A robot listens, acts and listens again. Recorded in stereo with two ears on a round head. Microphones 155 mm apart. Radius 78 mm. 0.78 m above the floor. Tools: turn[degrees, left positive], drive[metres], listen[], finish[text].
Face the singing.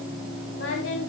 Action: turn[90]
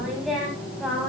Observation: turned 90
Action: finish[Found it: singing, straight ahead, over 4 m away.]